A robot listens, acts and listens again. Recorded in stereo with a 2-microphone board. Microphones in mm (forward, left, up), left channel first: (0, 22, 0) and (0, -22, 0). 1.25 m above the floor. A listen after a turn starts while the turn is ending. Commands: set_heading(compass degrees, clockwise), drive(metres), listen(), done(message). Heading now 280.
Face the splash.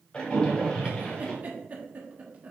set_heading(255)
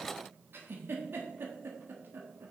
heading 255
listen()
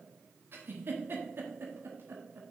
done("I heard a splash, but can't make it out now. It was about straight ahead or 130° left.")